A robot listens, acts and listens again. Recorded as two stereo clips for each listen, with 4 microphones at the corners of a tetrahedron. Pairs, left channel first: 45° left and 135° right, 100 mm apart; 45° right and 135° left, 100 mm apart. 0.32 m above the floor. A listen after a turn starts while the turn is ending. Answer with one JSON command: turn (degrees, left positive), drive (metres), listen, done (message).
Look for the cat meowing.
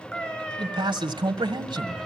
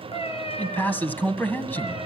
{"turn": -35}
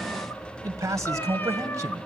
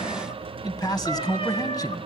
{"listen": true}
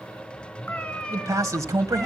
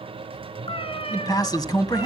{"turn": -35}
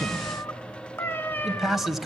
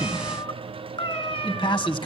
{"turn": -25}
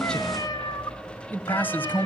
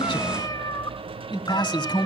{"done": "Facing the cat meowing."}